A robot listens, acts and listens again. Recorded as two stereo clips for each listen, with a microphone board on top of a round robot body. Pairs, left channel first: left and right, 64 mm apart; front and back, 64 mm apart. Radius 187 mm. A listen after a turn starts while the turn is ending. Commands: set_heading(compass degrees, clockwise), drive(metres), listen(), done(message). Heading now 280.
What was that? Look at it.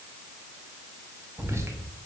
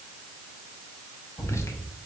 set_heading(325)
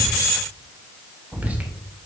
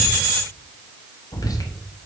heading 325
set_heading(345)
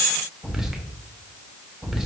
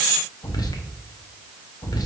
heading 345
set_heading(355)
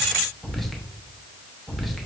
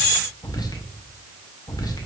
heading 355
done("Facing the whispering, 1 to 2 m away.")